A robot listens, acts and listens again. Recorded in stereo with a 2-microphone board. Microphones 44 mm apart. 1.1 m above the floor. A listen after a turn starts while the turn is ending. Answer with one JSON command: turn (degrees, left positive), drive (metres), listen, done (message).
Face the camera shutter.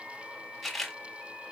{"turn": 30}
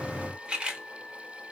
{"turn": -25}
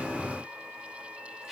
{"done": "Facing the camera shutter."}